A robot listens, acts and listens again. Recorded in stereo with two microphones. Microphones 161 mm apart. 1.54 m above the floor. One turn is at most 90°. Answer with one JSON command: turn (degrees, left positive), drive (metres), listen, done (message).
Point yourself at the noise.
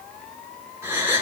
{"turn": -15}
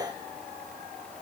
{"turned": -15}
{"listen": true}
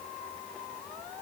{"done": "I heard a gasp, but can't make it out now. It was about straight ahead or 150° right."}